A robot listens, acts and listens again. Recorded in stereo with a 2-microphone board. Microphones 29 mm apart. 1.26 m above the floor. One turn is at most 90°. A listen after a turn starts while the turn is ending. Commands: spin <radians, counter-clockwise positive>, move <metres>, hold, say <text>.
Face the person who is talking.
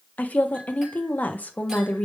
spin 1.22
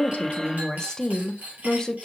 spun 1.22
spin 0.44
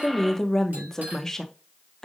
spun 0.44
spin 0.26
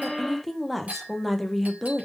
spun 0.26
say Facing the woman speaking, under 1 m away.